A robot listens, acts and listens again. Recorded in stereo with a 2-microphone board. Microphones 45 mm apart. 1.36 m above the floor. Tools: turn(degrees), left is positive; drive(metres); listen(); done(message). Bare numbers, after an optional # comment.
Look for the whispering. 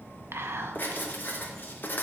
# The whispering: about 65° right or 115° right.
turn(-65)
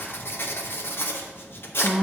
# So it is at 10° right.
turn(-10)
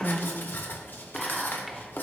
done("Facing the whispering.")